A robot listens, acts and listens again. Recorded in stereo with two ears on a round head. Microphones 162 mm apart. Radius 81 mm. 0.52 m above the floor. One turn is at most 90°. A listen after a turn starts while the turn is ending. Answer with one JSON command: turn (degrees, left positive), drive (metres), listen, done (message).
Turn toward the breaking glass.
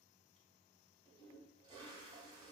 {"listen": true}
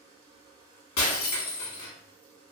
{"turn": 75}
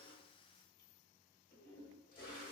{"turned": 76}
{"listen": true}
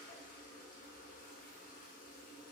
{"done": "I heard breaking glass, but can't make it out now. It was about straight ahead or 30° left."}